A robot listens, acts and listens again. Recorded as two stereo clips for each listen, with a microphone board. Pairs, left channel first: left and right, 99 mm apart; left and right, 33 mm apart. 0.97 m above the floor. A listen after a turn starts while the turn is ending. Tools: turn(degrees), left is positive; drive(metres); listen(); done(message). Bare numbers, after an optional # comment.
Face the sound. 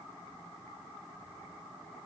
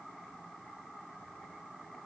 listen()
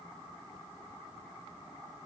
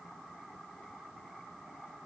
listen()
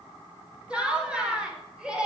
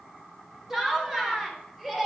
turn(-30)
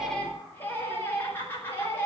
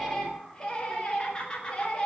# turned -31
# So it is at 20° left.
turn(20)
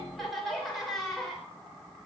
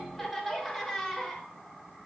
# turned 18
done("Found it: laughter, straight ahead, over 4 m away.")